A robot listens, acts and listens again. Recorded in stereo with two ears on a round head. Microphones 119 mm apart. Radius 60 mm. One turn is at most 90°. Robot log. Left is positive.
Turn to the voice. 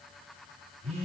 cmd idle
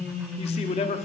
note: The man speaking: about 50° left or 130° left.
cmd yaw +50
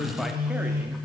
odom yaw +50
cmd idle
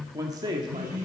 note: So it is at 35° right.
cmd yaw -35
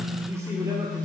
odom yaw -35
cmd idle
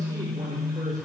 cmd idle
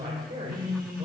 note: The man speaking is now 30° right.
cmd yaw -30
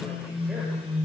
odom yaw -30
cmd idle
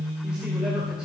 cmd idle
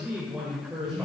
end: Facing the man speaking, 2 to 4 m away.